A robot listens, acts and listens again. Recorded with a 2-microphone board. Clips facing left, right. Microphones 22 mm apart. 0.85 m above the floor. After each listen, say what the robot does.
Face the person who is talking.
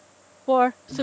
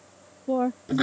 Turn 60° left.
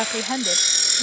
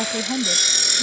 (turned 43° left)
Turn 35° left.
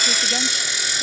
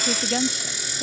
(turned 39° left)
Keep listening.
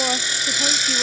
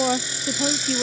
Facing the woman speaking.